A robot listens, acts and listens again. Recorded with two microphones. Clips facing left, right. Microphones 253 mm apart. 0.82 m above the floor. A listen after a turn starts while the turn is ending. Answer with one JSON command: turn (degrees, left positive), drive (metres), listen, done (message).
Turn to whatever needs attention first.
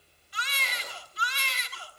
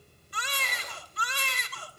{"turn": -55}
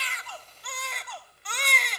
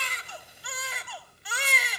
{"done": "Facing the baby crying, 1 to 2 m away."}